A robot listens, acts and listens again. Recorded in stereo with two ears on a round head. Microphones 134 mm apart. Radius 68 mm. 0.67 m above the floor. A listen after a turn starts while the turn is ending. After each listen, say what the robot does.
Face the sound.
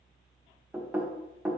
Turn 30° right.
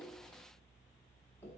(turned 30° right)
Keep listening.
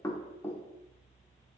Turn 15° left.
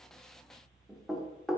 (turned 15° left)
Facing the knocking.